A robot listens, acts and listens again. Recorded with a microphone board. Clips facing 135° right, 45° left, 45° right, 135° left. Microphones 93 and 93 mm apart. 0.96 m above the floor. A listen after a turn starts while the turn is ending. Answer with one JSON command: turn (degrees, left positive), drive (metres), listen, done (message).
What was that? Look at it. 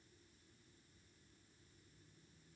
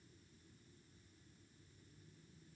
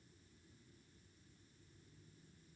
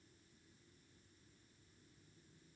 {"listen": true}
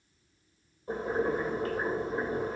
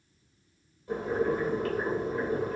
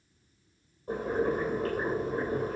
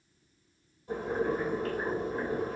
{"turn": -85}
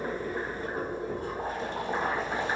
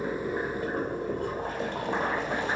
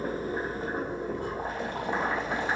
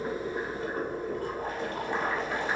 {"turn": 25}
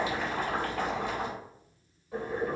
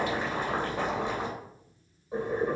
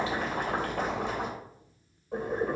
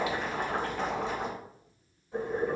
{"turn": -20}
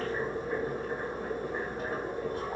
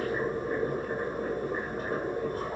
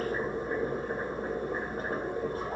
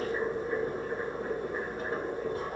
{"done": "Found it: boiling, straight ahead, 2 to 4 m away."}